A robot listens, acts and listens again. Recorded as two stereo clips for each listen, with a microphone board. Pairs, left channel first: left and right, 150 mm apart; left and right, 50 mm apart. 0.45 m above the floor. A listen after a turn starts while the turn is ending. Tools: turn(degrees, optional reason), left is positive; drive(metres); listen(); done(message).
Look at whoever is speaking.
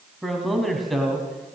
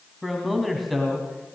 turn(degrees=30)
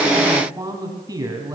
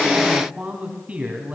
turn(degrees=-25, reason="So it is at 25° right.")
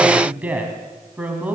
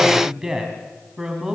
turn(degrees=-10, reason="The man speaking is now 10° right.")
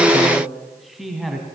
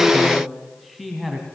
done("Facing the man speaking.")